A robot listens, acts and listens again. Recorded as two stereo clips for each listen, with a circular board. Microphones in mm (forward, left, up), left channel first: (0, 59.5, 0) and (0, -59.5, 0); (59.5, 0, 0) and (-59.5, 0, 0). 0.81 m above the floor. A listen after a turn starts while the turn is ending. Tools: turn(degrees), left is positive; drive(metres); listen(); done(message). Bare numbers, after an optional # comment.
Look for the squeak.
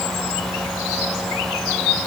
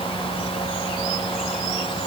listen()
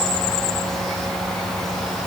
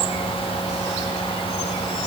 listen()
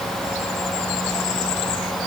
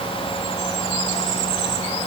done("I can't make out a squeak.")